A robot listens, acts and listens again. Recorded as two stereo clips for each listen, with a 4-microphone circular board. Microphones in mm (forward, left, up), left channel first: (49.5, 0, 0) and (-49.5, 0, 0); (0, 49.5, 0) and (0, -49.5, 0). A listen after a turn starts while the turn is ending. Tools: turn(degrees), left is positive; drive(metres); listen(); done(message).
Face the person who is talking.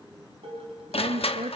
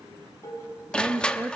turn(degrees=-160)
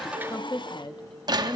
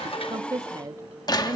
turn(degrees=-35)
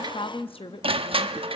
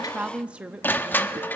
turn(degrees=-15)
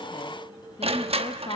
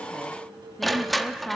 done("Found it: a woman speaking, straight ahead, under 1 m away.")